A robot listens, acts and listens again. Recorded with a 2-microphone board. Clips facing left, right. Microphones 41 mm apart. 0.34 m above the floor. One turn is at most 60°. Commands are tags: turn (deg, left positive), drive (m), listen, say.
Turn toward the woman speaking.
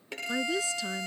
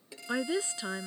<turn deg="-30"/>
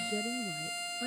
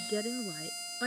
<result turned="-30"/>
<turn deg="-60"/>
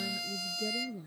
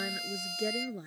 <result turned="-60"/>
<turn deg="-60"/>
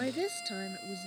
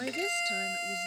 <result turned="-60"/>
<say>Found it: a woman speaking, straight ahead.</say>